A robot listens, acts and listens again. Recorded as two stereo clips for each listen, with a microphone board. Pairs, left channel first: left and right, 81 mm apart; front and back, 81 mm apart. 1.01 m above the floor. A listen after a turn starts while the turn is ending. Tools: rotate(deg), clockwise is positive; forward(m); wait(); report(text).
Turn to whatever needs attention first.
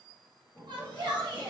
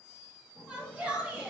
rotate(105)
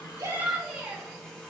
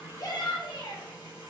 rotate(10)
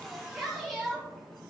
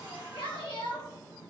report("Found it: a shout, straight ahead.")